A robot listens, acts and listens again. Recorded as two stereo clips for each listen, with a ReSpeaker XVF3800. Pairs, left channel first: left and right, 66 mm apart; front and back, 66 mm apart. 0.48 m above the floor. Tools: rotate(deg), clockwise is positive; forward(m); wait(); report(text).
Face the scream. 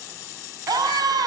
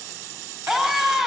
rotate(90)
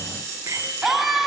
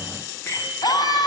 report("Facing the scream, over 4 m away.")